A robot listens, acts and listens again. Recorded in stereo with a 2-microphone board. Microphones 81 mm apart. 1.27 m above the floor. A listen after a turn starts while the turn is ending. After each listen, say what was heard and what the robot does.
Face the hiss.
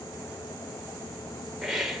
Turn 30° right.
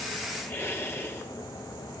So it is at 30° left. Turn 30° left.
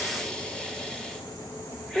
The hiss is now 10° left. Turn 10° left.
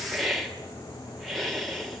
Found it: a hiss, straight ahead.